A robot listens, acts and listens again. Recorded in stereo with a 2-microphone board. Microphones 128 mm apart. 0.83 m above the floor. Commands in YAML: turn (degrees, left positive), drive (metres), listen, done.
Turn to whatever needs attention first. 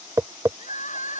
turn: 65
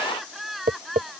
done: "Found it: crying, straight ahead."